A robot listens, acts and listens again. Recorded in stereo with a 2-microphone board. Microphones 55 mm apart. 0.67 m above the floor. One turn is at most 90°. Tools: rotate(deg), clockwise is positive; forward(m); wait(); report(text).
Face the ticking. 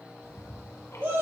rotate(-70)
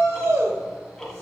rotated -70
rotate(-10)
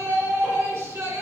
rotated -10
wait()
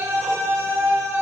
wait()
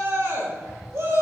report("Facing the ticking.")